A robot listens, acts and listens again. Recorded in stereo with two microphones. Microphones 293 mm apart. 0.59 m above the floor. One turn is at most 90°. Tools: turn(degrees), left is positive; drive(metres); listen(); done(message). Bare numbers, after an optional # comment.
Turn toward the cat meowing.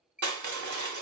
listen()
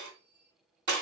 listen()
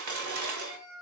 # The cat meowing: about 60° left or 120° left.
turn(60)
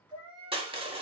# So it is at 45° left.
turn(45)
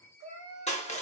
# The cat meowing is now 15° right.
turn(-15)
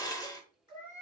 # The cat meowing is now 20° right.
turn(-20)
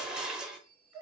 # The cat meowing is now 10° right.
turn(-10)
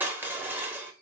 listen()
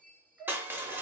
done("Facing the cat meowing, 1 to 2 m away.")